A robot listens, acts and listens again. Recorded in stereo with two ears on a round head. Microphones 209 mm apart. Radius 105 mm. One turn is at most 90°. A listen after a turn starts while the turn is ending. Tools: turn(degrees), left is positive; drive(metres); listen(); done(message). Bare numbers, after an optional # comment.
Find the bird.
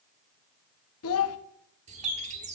# The bird: about 30° right or 150° right.
turn(-30)
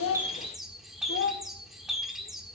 done("Facing the bird.")